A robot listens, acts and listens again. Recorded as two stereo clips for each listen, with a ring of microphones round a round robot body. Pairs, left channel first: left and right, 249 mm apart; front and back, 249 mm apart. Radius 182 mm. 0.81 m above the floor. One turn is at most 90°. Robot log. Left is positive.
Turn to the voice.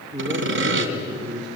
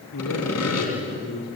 note: The man speaking: 15° right.
cmd yaw -15
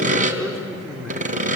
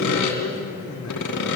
end: Facing the man speaking, 2 to 4 m away.